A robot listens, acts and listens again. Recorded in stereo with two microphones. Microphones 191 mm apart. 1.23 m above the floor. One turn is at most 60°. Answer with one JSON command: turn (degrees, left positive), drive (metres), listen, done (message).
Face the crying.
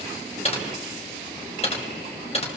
{"listen": true}
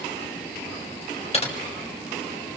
{"listen": true}
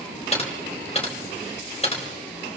{"done": "I can't make out crying, only typing on a keyboard."}